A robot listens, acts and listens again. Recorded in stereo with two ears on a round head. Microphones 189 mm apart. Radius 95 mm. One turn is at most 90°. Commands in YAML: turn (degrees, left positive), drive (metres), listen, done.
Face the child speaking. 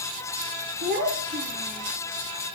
turn: -45
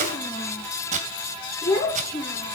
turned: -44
turn: 15
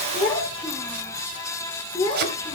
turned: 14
turn: 10
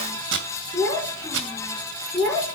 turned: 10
done: "Facing the child speaking."